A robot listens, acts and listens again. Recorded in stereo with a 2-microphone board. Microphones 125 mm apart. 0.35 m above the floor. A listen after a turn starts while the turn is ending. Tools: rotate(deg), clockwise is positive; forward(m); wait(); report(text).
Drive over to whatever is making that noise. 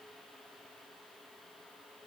wait()
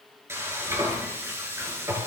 rotate(20)
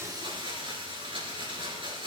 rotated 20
rotate(135)
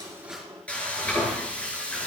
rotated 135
rotate(-10)
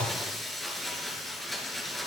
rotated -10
forward(1.0)
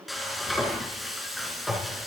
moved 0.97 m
forward(1.0)
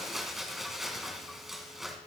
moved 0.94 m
forward(1.0)
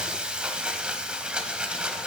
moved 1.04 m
rotate(10)
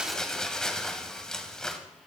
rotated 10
forward(1.0)
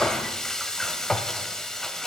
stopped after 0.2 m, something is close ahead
report("I am next to the frying.")